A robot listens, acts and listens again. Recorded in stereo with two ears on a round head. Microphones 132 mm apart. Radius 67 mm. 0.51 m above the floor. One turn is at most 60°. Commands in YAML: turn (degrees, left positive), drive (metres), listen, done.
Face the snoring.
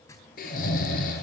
turn: 60
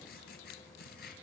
listen: true
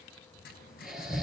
done: "Found it: snoring, straight ahead."